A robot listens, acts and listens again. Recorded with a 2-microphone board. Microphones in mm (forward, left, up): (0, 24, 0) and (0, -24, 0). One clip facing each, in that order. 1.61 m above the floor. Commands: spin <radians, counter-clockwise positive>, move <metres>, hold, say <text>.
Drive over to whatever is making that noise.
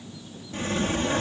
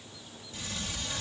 spin 0.70
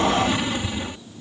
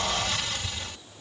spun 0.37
spin 0.35
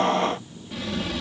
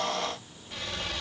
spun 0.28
move 1.0
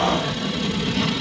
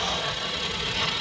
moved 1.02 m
move 1.0
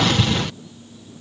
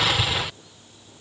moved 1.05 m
move 1.0
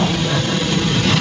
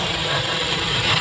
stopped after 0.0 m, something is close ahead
say Arrived at the sliding door, straight ahead.